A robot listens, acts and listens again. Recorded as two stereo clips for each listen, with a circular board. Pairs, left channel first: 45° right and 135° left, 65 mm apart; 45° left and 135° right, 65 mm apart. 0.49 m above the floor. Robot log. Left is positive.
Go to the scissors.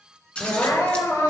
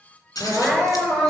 note: The scissors: 25° left.
cmd yaw +25
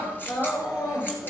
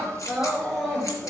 cmd idle
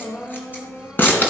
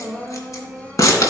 note: The scissors is now 10° left.
cmd yaw +10
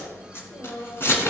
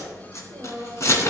cmd fwd 1.0
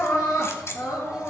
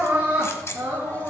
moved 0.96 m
cmd idle
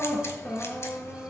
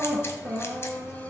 cmd idle
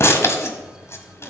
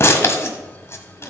cmd fwd 1.0
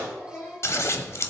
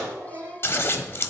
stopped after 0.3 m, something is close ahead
end: I am next to the scissors.